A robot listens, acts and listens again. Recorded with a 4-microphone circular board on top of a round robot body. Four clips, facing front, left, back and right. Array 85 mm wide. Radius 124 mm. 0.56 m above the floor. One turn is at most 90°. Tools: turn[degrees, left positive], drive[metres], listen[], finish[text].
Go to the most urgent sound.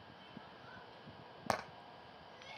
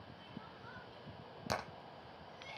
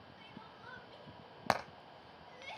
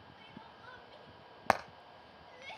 Thought: The crying: 140° right.
Action: turn[-90]
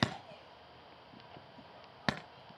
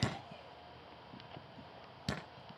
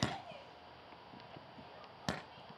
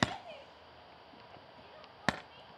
Thought: The crying is now 95° right.
Action: turn[-90]
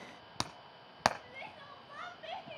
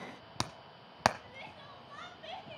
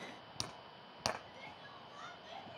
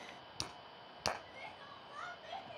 Thought: The crying is now 15° left.
Action: turn[15]
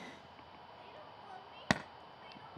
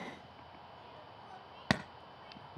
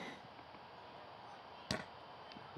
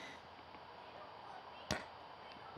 Action: listen[]
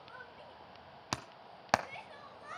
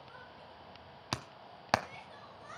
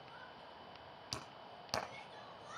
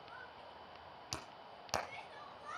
Action: drive[1.0]
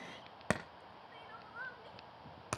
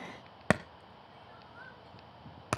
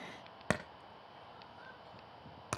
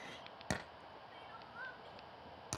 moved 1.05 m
Thought: The crying is now 10° right.
Action: turn[-10]
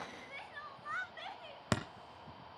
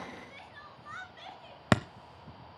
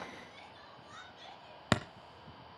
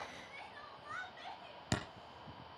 Action: drive[1.0]
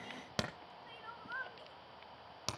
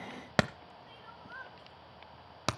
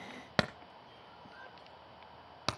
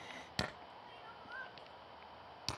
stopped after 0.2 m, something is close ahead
Action: finish[Arrived at the crying, straight ahead.]